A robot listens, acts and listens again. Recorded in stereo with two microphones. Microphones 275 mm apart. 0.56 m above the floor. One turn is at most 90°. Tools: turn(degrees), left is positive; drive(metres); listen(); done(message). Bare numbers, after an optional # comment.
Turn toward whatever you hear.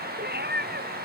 # The cat meowing: about 35° right or 145° right.
turn(-35)
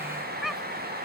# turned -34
done("Facing the cat meowing.")